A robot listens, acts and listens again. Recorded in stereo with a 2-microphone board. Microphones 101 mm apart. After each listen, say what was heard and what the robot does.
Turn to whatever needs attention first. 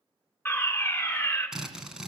The fire alarm: about 20° left or 160° left. Turn 20° left.
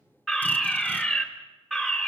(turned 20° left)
Facing the fire alarm, 2 to 4 m away.